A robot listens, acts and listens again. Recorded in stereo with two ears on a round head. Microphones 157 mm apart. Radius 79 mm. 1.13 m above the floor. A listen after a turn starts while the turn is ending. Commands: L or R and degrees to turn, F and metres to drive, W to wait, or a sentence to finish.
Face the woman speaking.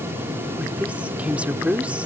R30
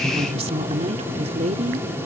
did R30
R145
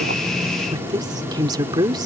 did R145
R25
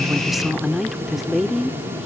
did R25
Facing the woman speaking.